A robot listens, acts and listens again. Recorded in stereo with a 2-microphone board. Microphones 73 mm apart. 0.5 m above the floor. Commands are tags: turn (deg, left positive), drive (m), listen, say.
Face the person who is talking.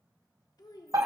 <turn deg="65"/>
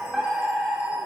<listen/>
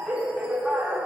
<listen/>
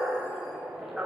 <say>I heard a child speaking, but can't make it out now. It was about straight ahead or 50° left.</say>